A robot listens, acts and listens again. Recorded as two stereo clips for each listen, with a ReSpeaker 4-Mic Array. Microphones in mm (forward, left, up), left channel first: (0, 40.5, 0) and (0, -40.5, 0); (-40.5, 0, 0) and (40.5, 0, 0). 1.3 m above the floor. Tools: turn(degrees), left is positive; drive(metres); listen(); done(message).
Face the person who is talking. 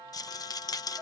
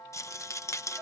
listen()
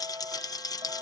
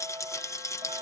listen()
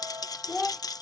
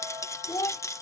turn(degrees=175)
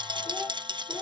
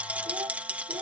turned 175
listen()
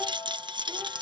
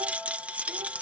listen()
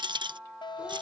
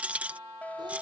done("Facing where the child speaking came from. I can't hear it now.")